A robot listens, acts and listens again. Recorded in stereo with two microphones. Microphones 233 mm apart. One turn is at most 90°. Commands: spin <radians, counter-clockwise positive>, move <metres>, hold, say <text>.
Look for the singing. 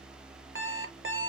hold
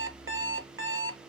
hold
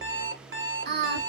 spin -0.79
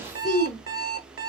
spin 0.17
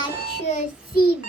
spin 0.79
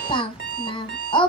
spin 0.44
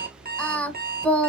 say Found it: singing, straight ahead, 1 to 2 m away.